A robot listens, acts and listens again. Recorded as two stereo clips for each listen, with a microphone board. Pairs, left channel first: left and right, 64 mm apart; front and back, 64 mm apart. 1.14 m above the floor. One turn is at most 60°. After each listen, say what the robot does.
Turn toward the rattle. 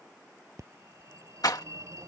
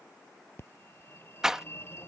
Turn 60° left.
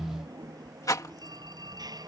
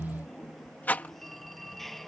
Turn 60° left.
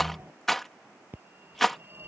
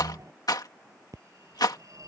Facing the rattle.